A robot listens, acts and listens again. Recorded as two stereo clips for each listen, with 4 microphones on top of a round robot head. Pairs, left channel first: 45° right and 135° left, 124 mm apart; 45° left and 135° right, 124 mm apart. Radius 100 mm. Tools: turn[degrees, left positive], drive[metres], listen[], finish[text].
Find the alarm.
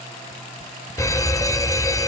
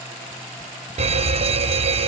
Thought: The alarm: 105° right.
Action: turn[-105]
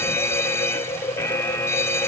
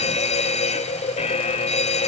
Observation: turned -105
Thought: The alarm is now 25° left.
Action: turn[25]
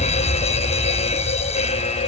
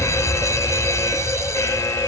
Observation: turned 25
Thought: The alarm is now 20° right.
Action: turn[-20]
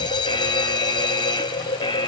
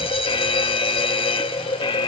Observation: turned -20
Action: finish[Facing the alarm.]